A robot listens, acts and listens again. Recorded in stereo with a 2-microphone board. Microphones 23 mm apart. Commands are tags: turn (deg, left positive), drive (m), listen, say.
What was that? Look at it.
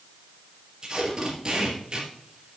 <turn deg="-35"/>
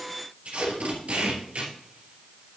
<turn deg="-110"/>
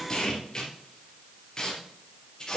<turn deg="30"/>
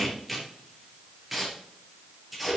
<say>Facing the tape being pulled.</say>